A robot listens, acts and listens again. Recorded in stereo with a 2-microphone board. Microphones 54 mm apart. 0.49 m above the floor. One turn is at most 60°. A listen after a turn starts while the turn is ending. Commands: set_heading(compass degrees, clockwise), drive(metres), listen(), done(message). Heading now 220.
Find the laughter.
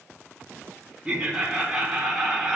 set_heading(250)
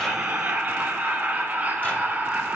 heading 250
set_heading(310)
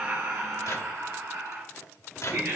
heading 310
set_heading(10)
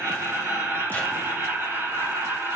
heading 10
set_heading(65)
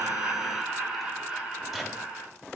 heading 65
set_heading(80)
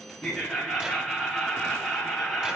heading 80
done("Found it: laughter, straight ahead.")